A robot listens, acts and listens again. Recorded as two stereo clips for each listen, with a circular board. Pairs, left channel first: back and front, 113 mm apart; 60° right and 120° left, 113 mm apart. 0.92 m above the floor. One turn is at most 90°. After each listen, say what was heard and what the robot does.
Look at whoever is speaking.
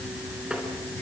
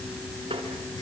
Keep listening.
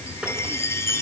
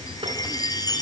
Keep listening.
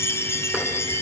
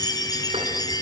I can't make out anyone speaking to turn to.